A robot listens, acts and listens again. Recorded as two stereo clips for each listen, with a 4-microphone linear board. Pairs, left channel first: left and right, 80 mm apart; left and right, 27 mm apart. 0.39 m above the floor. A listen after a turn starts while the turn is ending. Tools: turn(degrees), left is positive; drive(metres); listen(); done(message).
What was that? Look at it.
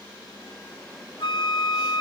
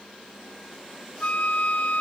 turn(degrees=90)
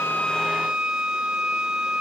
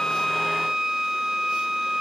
turn(degrees=-10)
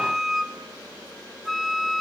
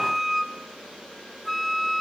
done("Facing the flute.")